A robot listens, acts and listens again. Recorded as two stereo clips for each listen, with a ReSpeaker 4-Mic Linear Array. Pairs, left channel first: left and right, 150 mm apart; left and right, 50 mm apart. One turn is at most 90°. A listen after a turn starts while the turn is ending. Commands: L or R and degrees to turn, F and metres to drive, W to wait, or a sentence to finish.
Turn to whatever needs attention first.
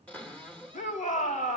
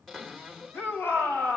L60
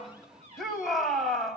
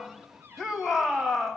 Facing the shout.